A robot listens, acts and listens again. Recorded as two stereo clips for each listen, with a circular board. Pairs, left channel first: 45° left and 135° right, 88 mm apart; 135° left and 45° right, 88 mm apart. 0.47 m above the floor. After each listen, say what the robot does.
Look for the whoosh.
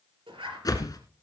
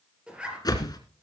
Turn 90° left.
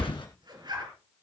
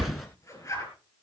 Turn 45° left.
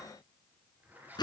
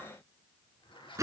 Turn 10° left.
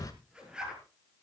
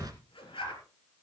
Facing the whoosh, 1 to 2 m away.